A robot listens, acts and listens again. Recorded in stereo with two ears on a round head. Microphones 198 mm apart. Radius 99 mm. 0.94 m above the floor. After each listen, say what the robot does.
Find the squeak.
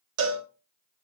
Keep listening.
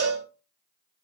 Keep listening.
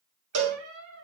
Turn 65° right.
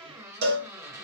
Turn 15° right.
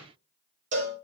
Keep listening.
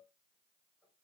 Keep listening.
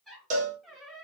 Facing the squeak, 1 to 2 m away.